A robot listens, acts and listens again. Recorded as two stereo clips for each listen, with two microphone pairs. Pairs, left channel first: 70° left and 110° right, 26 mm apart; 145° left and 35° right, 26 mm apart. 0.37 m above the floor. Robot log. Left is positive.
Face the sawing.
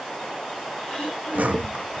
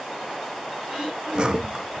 note: The sawing: 90° right.
cmd yaw -90
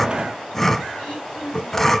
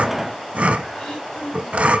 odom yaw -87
end: Facing the sawing, under 1 m away.